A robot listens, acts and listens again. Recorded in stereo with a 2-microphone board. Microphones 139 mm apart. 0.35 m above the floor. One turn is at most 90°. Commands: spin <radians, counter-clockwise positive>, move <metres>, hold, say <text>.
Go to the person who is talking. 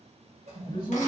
spin 0.52
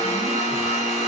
hold
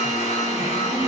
hold
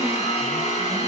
say I heard a man speaking, but can't make it out now. It was about straight ahead or 120° left. I did not reach it.